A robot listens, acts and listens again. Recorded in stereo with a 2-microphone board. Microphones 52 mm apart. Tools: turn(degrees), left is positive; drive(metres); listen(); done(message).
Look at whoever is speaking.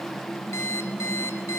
listen()
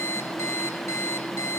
listen()
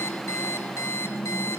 done("I can't make out anyone speaking to turn to.")